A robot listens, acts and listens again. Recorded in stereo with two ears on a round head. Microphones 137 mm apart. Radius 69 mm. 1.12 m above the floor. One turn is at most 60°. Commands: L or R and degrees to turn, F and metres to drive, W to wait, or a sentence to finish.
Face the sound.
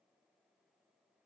W
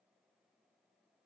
W
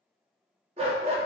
R40
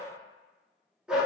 Facing the dog barking.